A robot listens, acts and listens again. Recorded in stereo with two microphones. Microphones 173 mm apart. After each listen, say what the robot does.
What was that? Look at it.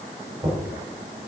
Turn 15° right.
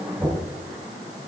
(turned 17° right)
Found it: knocking, straight ahead, 2 to 4 m away.